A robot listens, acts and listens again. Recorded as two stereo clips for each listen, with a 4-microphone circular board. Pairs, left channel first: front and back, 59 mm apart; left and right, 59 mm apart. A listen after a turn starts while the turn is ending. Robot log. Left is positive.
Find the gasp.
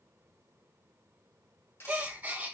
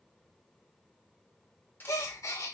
note: The gasp: 120° left.
cmd yaw +120
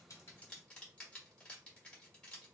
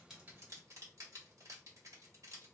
end: Facing where the gasp came from. I can't hear it now.